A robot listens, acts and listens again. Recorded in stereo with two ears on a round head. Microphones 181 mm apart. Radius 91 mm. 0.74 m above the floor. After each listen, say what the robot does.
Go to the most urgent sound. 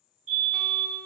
Turn 40° right.
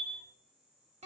Drive 1.0 m forward.
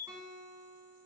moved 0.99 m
Turn 20° right.
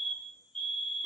Drive 1.0 m forward.
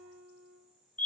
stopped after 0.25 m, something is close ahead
Turn 10° left.
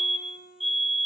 Arrived at the fire alarm, straight ahead.